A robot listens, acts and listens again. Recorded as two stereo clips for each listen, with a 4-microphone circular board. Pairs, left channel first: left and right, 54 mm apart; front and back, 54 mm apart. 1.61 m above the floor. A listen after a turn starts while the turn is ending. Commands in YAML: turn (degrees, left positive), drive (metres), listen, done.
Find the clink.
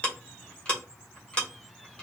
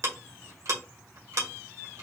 listen: true
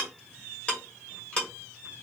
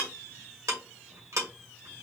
listen: true
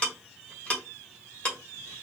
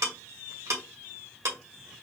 done: "I can't make out a clink, only ticking."